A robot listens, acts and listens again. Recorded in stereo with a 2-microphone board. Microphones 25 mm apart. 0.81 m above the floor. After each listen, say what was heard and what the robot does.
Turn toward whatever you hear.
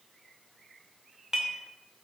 The dishes clattering: about 25° right or 155° right. Turn 25° right.
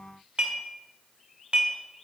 So it is at 130° right. Turn 130° right.
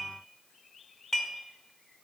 The dishes clattering is now 15° left. Turn 15° left.
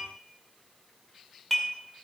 Found it: dishes clattering, straight ahead, 1 to 2 m away.